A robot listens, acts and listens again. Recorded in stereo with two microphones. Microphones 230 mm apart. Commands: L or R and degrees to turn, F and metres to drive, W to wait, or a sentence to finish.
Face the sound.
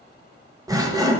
R15
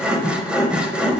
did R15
Facing the sawing, 1 to 2 m away.